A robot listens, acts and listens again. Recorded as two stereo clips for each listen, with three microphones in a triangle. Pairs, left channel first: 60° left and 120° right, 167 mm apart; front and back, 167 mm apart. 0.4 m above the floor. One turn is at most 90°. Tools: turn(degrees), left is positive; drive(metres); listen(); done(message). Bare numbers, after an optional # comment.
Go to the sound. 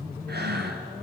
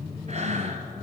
# The breathing: 130° right.
turn(-90)
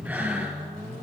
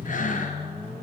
# The breathing is now 40° right.
turn(-40)
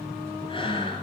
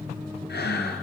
drive(1.0)
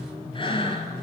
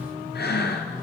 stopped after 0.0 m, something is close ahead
done("Something is in my way. I am facing the breathing but have not reached it.")